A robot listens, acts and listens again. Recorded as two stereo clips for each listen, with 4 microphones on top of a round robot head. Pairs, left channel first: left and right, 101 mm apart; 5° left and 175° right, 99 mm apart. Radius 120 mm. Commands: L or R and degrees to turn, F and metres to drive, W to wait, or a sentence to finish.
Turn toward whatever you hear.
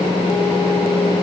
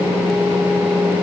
W
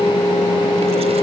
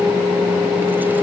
W
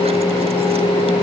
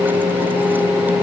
I can't make out anything to turn to.